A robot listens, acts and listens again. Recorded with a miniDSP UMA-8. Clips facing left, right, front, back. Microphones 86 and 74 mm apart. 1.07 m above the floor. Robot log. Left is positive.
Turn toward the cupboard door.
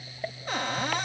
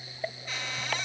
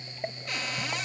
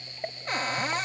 note: The cupboard door: 130° left.
cmd yaw +130
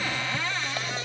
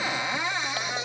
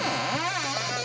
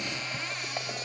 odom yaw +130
note: The cupboard door is now 20° right.
cmd yaw -20
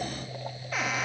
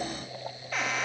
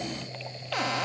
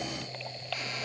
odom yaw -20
end: Facing the cupboard door.